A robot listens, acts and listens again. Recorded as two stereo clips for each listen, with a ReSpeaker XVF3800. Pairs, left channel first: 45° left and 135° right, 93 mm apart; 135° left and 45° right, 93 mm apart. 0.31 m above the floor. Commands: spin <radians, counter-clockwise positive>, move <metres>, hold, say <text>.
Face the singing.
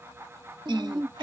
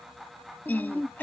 spin -2.71
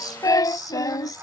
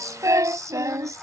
say Facing the singing.